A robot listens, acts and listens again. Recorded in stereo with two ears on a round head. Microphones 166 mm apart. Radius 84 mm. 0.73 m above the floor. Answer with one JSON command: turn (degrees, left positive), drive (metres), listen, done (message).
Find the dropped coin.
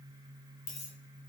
{"turn": 40}
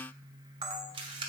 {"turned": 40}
{"listen": true}
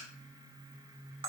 {"done": "I heard a dropped coin, but can't make it out now. It was about straight ahead or 100° left."}